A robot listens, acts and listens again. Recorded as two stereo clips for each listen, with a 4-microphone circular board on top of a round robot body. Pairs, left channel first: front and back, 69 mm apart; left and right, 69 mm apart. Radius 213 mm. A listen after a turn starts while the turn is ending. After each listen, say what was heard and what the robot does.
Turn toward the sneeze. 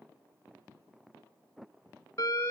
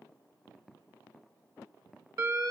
Keep listening.
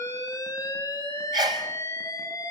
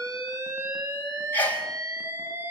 The sneeze: 155° left. Turn 155° left.
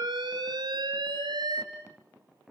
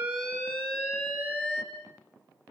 I heard a sneeze from this way, but can't make it out now.